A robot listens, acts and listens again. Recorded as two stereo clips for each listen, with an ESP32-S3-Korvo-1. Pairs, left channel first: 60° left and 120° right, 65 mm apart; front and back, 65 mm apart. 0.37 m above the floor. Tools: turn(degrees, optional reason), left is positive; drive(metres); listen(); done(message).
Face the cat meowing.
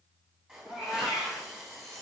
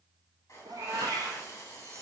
turn(degrees=155, reason="The cat meowing: 155° left.")
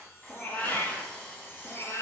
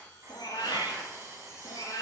turn(degrees=15, reason="The cat meowing is now 15° left.")
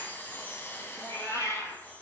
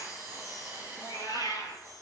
turn(degrees=20, reason="The cat meowing is now 20° left.")
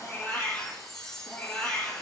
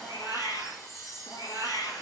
done("Facing the cat meowing.")